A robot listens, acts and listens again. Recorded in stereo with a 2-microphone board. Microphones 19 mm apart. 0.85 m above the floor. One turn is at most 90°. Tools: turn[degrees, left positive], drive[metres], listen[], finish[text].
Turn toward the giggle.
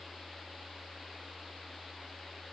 Action: listen[]
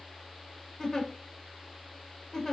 Thought: The giggle: about 35° left or 145° left.
Action: turn[35]
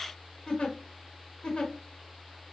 Thought: So it is at 110° left.
Action: turn[90]
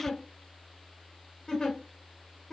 Thought: The giggle is now 30° left.
Action: turn[30]
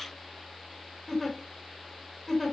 Action: finish[Found it: a giggle, straight ahead.]